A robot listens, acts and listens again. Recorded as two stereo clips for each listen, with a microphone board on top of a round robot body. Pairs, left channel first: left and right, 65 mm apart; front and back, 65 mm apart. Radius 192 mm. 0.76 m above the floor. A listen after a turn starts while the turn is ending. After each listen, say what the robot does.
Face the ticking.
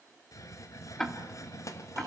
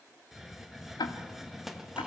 Turn 10° left.
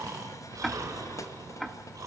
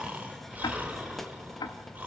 Facing the ticking, 1 to 2 m away.